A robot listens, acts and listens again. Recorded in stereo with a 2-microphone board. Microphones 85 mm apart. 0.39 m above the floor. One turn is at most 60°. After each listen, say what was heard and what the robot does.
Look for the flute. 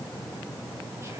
Keep listening.
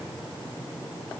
Keep listening.
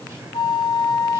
The flute: about 65° left or 115° left. Turn 60° left.
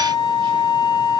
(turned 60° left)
So it is at 55° left. Turn 55° left.
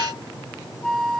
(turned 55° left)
Found it: a flute, straight ahead, under 1 m away.